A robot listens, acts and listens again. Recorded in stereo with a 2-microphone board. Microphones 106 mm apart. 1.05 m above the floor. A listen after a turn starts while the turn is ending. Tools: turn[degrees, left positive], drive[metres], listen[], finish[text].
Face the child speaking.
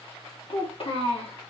Thought: The child speaking: about 65° left or 115° left.
Action: turn[65]
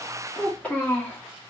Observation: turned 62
Thought: So it is at 15° left.
Action: turn[15]
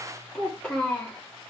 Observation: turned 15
Thought: The child speaking is now 10° left.
Action: turn[10]
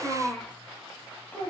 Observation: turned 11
Thought: The child speaking is now 10° left.
Action: turn[10]
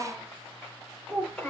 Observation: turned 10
Action: finish[Found it: a child speaking, straight ahead, 2 to 4 m away.]